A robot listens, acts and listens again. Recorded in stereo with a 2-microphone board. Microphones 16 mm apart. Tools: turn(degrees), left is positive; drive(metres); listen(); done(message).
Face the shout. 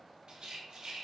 listen()
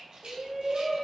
turn(degrees=-30)
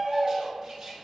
turn(degrees=-140)
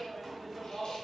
done("Facing the shout.")